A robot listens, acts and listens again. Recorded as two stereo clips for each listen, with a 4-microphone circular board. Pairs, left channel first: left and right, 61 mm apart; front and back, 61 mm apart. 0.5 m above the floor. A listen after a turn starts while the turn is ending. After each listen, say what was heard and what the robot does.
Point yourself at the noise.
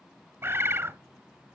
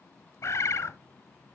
The bird: 40° right. Turn 40° right.
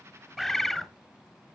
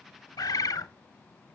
Found it: a bird, straight ahead.